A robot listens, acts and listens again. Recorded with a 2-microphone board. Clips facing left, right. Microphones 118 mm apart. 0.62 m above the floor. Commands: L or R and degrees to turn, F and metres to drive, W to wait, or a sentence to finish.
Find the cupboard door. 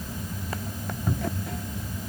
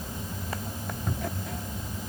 L30
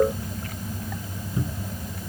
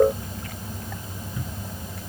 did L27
L150
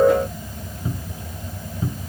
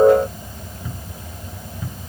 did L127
L25
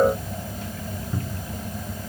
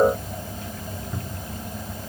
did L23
Facing the cupboard door.